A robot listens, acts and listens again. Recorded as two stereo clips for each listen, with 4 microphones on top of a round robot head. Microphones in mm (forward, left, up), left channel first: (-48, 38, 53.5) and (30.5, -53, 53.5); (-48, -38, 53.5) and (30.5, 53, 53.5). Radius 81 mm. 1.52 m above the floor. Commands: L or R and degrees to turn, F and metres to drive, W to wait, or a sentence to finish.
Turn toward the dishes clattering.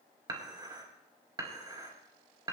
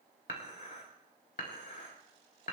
R105
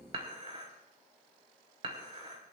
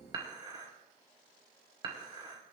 Facing the dishes clattering, over 4 m away.